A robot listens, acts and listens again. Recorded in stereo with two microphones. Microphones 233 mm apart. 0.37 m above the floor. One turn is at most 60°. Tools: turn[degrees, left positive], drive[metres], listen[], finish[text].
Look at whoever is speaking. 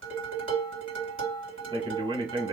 Thought: The man speaking: about 20° right or 160° right.
Action: turn[-20]
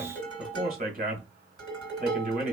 Thought: So it is at 135° right.
Action: turn[-60]
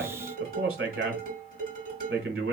Thought: The man speaking is now 85° right.
Action: turn[-60]
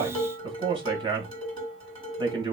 Thought: The man speaking is now 25° right.
Action: turn[-25]
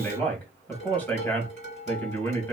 Thought: The man speaking is now 10° left.
Action: turn[10]
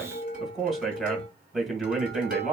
Action: finish[Facing the man speaking.]